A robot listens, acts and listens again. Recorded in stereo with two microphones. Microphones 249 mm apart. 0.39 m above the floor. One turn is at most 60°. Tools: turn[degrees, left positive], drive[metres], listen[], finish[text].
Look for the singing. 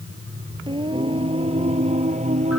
Thought: The singing: about 30° right or 150° right.
Action: turn[-30]
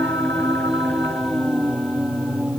Action: finish[Facing the singing.]